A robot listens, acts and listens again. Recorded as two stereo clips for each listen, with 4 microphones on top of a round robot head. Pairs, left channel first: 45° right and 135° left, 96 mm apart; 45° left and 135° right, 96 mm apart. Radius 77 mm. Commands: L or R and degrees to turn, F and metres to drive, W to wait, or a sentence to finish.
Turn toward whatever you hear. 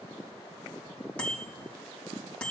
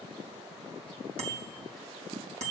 R120
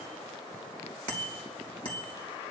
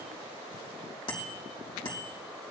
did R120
Facing the bicycle bell.